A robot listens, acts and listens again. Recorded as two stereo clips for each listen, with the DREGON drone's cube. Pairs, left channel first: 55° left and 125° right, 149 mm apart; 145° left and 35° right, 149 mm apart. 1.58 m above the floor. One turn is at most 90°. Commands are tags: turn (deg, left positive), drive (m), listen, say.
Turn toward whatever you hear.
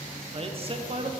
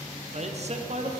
<turn deg="-75"/>
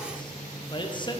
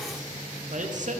<say>Facing the man speaking, under 1 m away.</say>